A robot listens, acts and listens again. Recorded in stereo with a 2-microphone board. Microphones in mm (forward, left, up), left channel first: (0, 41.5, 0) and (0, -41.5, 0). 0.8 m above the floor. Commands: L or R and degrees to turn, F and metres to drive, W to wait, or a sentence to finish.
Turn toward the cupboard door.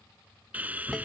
W
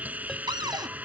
R65
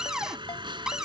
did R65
R10
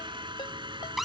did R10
Found it: a cupboard door, straight ahead.